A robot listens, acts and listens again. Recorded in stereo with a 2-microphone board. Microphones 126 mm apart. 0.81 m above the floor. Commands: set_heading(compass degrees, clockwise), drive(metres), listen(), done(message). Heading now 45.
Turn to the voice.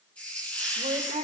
set_heading(135)
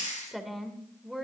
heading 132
done("Facing the woman speaking.")